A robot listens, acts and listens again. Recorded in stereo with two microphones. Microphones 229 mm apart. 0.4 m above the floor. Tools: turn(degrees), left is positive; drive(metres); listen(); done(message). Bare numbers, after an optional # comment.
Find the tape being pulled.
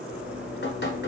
listen()
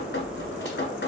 listen()
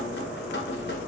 done("I can't make out tape being pulled, only dripping.")